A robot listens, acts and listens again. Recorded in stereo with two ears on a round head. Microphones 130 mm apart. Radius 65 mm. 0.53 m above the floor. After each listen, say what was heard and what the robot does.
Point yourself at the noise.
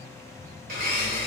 The blender: about 65° right or 115° right. Turn 65° right.
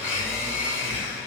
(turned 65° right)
So it is at 10° right. Turn 10° right.
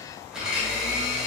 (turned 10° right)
Found it: a blender, straight ahead, 1 to 2 m away.